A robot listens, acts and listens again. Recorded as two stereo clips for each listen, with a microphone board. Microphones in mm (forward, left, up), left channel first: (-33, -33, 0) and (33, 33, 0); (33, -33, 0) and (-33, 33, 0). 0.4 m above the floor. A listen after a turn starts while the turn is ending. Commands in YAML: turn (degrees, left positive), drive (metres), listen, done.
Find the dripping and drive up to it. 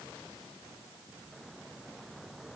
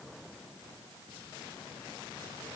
listen: true
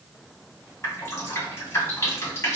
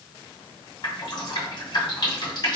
turn: -75
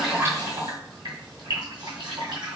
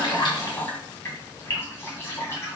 turn: 15
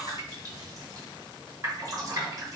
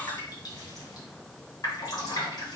drive: 1.0
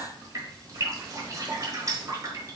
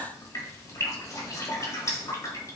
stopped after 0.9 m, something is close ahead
done: "Arrived at the dripping, straight ahead."